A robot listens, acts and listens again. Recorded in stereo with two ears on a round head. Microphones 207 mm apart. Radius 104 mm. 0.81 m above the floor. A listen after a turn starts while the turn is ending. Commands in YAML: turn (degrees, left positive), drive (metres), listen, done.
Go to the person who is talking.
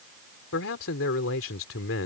turn: 65
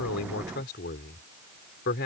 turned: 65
turn: 50
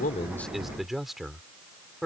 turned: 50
drive: 1.0
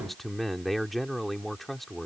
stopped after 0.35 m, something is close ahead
done: "Blocked. The man speaking is further on, straight ahead."